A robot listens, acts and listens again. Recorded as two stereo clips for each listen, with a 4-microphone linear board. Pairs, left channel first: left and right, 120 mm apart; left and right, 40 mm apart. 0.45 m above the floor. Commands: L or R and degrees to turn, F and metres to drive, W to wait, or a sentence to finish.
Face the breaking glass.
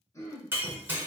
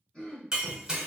R20
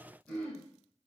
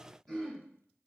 W
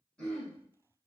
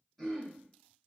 I heard breaking glass, but can't make it out now. It was about straight ahead or 140° right.